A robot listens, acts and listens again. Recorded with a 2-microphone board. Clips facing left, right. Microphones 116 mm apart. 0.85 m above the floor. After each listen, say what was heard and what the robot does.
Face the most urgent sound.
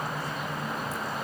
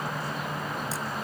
Keep listening.
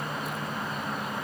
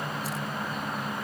Keep listening.
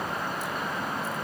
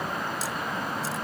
I can't make out anything urgent to turn to.